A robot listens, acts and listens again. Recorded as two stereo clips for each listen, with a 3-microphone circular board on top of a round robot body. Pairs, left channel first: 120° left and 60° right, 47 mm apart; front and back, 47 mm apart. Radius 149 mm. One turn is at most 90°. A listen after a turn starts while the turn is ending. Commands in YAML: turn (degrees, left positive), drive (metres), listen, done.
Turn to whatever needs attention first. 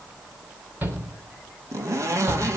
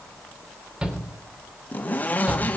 turn: -90
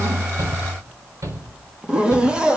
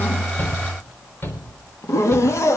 turn: -45
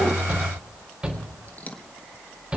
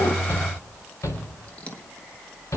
turn: 10
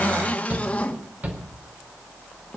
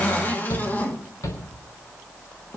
done: "Facing the shout, 2 to 4 m away."